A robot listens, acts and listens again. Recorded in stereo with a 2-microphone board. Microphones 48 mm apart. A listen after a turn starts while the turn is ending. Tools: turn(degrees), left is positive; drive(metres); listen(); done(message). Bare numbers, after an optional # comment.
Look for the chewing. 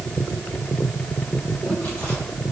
listen()
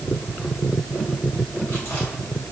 listen()
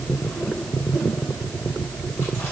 done("I can't make out chewing to turn to.")